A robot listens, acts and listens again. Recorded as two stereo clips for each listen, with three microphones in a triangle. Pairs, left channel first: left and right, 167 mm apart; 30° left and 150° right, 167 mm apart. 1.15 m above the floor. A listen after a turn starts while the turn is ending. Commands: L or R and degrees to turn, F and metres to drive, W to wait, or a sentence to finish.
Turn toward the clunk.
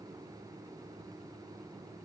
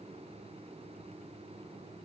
W
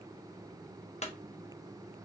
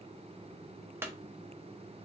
L135
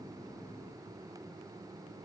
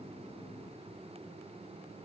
Facing where the clunk came from. I can't hear it now.